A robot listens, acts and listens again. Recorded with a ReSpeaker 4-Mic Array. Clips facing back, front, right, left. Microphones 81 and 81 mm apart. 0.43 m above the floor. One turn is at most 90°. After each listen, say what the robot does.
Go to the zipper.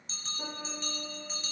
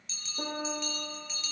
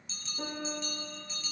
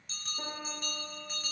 Keep listening.
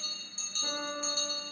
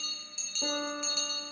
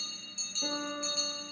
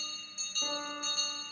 Keep listening.
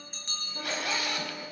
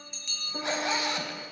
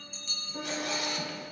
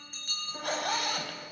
Turn 60° left.
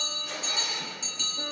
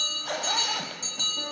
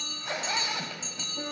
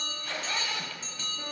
Turn 20° right.
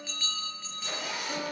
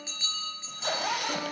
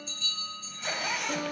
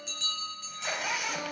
Drive 1.0 m forward.
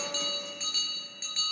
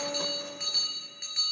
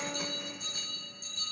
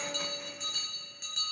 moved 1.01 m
Keep listening.
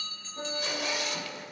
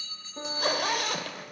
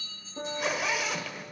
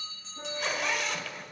Drive 1.0 m forward.
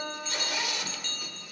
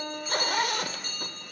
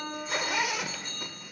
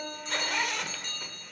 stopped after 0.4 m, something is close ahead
Turn 10° right.
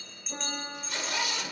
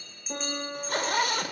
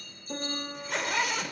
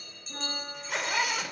I am next to the zipper.